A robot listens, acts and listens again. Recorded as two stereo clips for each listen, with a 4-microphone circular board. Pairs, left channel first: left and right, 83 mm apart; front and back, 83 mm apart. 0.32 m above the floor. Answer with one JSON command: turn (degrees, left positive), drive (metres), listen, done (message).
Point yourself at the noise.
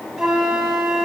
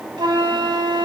{"turn": -175}
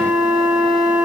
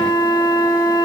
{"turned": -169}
{"done": "Facing the flute, under 1 m away."}